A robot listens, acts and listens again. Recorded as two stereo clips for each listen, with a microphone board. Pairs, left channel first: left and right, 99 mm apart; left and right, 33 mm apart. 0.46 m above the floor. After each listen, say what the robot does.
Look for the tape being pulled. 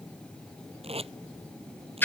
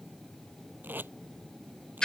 Turn 90° right.
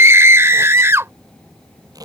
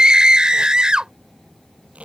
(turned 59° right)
Turn 40° right.
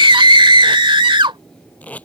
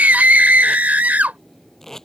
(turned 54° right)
Turn 15° left.
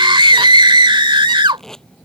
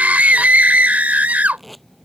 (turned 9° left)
Facing the tape being pulled.